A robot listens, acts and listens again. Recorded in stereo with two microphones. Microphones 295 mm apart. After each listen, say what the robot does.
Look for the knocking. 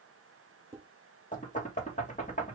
Turn 25° left.
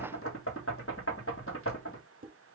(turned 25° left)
Turn 135° left.
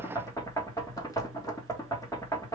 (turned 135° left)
Turn 10° left.
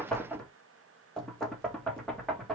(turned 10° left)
Found it: knocking, straight ahead, 1 to 2 m away.